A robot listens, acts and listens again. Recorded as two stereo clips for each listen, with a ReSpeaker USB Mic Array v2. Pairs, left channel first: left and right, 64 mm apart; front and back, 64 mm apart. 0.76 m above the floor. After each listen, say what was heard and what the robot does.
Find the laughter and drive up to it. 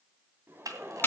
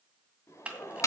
The laughter: 35° right. Turn 35° right.
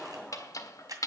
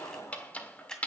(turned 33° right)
Drive 1.0 m forward.
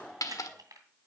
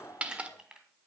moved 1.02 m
Drive 1.0 m forward.
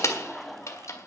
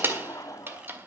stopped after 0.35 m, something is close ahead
Arrived at the laughter, straight ahead.